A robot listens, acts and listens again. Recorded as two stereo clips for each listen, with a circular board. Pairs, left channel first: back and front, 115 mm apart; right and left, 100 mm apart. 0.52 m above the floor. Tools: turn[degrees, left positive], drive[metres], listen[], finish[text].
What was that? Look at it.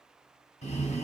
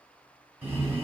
Thought: The breathing: 160° left.
Action: turn[160]
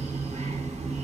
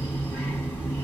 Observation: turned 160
Thought: The breathing is now 15° right.
Action: turn[-15]
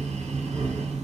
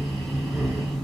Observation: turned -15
Action: finish[Facing the breathing, 1 to 2 m away.]